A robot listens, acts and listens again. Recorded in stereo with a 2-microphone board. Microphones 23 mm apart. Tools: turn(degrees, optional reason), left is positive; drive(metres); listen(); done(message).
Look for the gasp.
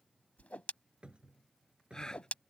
turn(degrees=30, reason="The gasp: about 30° left or 150° left.")
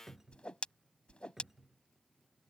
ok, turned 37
listen()
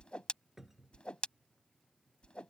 done("I heard a gasp, but can't make it out now. It was about 5° right or 110° left.")